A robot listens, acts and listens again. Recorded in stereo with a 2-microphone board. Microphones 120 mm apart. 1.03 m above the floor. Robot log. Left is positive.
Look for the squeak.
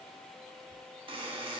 cmd idle
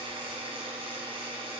cmd idle
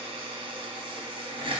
end: I can't make out a squeak, only a buzzer.